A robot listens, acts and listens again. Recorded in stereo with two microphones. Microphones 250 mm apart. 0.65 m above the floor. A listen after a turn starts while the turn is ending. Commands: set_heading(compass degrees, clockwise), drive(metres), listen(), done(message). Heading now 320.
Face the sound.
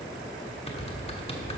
set_heading(295)
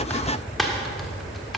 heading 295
done("Found it: typing on a keyboard, straight ahead, 1 to 2 m away.")